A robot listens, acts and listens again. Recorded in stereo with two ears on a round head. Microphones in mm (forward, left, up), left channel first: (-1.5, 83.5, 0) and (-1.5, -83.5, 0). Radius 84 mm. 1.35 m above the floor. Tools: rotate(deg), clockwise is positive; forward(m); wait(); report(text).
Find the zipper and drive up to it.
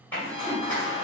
rotate(-30)
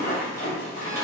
rotate(15)
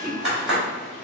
forward(1.0)
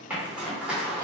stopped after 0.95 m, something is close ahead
rotate(10)
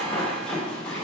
report("I am next to the zipper.")